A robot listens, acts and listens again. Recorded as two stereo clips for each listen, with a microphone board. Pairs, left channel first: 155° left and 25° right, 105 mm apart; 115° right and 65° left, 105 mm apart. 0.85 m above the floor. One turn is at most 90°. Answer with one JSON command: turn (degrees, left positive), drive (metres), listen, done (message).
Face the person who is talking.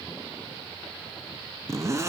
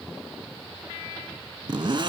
{"listen": true}
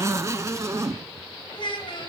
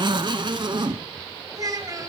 {"turn": 90}
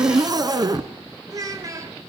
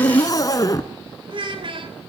{"turn": 35}
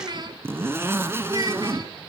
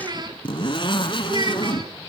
{"turn": 25}
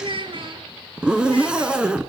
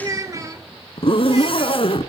{"turn": 10}
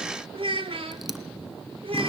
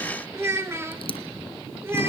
{"done": "Facing the child speaking, 2 to 4 m away."}